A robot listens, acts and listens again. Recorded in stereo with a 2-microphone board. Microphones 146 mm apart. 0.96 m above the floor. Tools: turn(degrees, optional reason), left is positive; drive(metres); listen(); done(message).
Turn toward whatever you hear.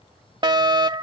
turn(degrees=-30, reason="The fire alarm: about 30° right or 150° right.")
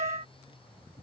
turn(degrees=-110, reason="So it is at 110° right.")
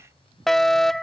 done("Found it: a fire alarm, straight ahead.")